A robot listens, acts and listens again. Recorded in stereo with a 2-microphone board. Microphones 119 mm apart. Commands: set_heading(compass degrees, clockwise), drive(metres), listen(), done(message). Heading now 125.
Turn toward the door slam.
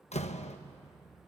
set_heading(65)
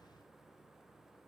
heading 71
listen()
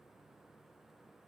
done("I heard a door slam, but can't make it out now. It was about 5° left or 65° left.")